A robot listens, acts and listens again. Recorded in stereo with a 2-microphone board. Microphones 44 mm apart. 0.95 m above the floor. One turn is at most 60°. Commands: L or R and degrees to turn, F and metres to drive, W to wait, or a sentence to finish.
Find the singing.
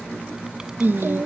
R60
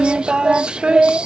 R25
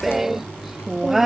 Facing the singing.